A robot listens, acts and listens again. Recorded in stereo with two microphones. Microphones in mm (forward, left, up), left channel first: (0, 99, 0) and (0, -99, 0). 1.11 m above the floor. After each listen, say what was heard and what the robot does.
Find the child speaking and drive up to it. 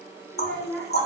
Turn 30° left.
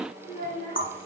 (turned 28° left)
So it is at 135° left. Turn 135° left.
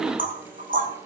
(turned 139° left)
Keep listening.
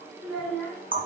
Drive 1.0 m forward.
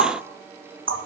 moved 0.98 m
Keep listening.
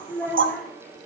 Drive 1.0 m forward.
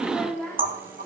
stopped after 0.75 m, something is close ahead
Arrived at the child speaking, straight ahead.